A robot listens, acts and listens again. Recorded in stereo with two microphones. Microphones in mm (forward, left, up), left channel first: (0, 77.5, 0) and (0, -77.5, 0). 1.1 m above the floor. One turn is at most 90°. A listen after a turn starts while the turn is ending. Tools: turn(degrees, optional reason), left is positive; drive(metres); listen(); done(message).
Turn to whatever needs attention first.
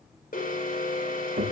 turn(degrees=70, reason="The alarm: about 70° left or 110° left.")
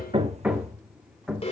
turn(degrees=40, reason="So it is at 40° left.")
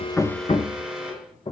done("Found it: an alarm, straight ahead.")